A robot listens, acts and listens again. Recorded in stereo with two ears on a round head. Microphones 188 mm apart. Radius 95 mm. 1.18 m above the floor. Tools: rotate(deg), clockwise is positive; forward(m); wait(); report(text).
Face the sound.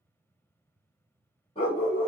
rotate(-25)
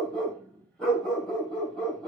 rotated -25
report("Found it: a dog barking, straight ahead.")